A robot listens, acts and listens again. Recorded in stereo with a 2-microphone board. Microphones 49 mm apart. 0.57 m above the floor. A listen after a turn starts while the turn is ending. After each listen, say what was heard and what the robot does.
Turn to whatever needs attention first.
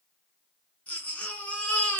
The baby crying: about 30° left or 150° left. Turn 30° left.
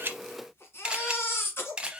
So it is at 120° left. Turn 120° left.
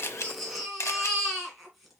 Facing the baby crying, 1 to 2 m away.